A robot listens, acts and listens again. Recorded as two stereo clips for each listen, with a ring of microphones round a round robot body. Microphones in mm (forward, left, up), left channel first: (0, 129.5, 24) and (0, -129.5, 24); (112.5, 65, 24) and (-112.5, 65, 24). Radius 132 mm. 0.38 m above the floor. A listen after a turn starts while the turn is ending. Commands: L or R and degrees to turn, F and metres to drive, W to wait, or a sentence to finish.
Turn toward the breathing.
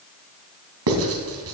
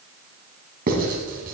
W
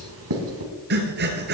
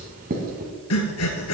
R35
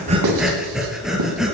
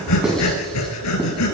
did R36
Facing the breathing, 1 to 2 m away.